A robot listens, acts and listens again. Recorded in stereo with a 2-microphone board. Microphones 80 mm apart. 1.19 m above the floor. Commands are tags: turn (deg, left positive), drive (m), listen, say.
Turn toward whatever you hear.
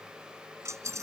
<turn deg="-35"/>
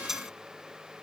<say>Found it: a dropped coin, straight ahead.</say>